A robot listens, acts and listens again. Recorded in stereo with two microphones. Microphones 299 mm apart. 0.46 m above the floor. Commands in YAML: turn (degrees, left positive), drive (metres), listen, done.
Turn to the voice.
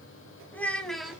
turn: 30
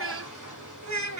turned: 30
turn: -60
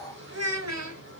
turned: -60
turn: -60
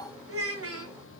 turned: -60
turn: -50
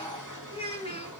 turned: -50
turn: 15
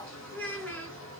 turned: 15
done: "Found it: a child speaking, straight ahead, 2 to 4 m away."